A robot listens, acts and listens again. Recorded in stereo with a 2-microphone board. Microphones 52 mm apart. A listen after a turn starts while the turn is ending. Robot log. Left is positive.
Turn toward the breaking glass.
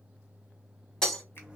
cmd yaw +30
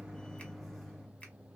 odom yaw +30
cmd idle
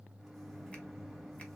end: I heard breaking glass, but can't make it out now. It was about 20° right or 140° left.